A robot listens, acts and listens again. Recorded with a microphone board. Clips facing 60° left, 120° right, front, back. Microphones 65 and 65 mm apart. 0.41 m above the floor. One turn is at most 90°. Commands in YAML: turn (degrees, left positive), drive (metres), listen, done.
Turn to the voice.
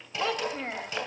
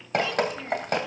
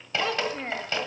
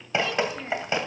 turn: 30
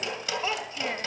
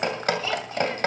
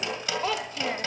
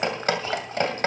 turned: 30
listen: true
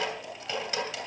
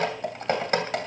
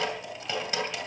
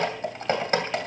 listen: true
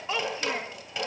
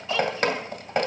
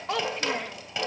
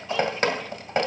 done: "Facing the child speaking, under 1 m away."